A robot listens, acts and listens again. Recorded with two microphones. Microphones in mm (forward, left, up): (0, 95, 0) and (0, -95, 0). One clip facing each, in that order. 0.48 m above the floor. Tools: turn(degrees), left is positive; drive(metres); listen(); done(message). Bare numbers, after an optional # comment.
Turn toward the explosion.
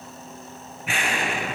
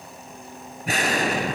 # The explosion: about 40° right or 140° right.
turn(-40)
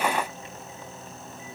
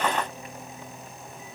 listen()
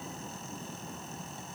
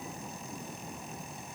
done("I heard an explosion, but can't make it out now. It was about straight ahead or 100° right.")